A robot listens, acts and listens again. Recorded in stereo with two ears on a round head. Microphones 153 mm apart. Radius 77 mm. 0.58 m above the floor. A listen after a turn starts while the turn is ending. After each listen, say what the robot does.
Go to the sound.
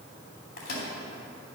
Turn 60° left.
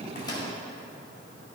Keep listening.
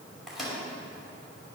Drive 1.0 m forward.
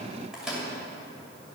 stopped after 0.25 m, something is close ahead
Blocked. The microwave is further on, straight ahead.